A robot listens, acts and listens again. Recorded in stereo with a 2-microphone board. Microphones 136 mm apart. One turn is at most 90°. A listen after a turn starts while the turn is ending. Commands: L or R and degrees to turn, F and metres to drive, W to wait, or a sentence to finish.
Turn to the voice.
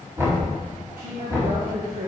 R90
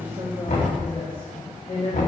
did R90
L50
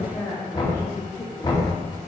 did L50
L35
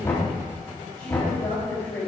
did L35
L20
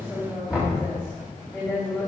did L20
Facing the woman speaking.